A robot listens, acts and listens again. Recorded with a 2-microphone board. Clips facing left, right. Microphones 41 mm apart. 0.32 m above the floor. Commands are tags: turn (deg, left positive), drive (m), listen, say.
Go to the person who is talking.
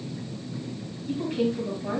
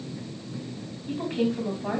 <turn deg="-25"/>
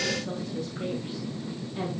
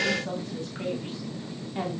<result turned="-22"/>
<turn deg="-125"/>
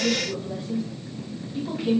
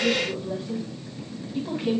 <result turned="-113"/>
<turn deg="-10"/>
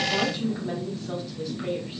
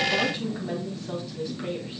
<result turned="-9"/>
<drive m="1.0"/>
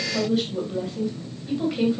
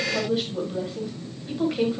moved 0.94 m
<drive m="1.0"/>
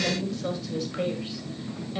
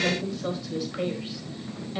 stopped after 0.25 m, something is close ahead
<say>I am next to the woman speaking.</say>